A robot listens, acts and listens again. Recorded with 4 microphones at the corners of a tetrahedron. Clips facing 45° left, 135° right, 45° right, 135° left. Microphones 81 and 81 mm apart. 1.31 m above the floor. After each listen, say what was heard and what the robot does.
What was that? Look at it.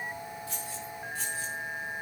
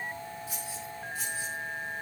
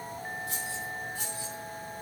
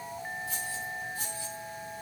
The keys jangling: 45° right. Turn 45° right.
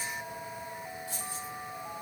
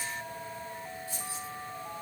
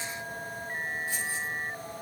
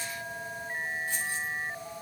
The keys jangling is now 30° left. Turn 30° left.
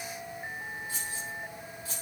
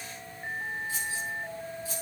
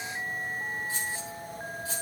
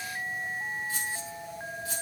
The keys jangling is now 15° left. Turn 15° left.
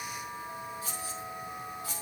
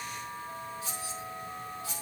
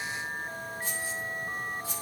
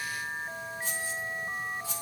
Found it: keys jangling, straight ahead.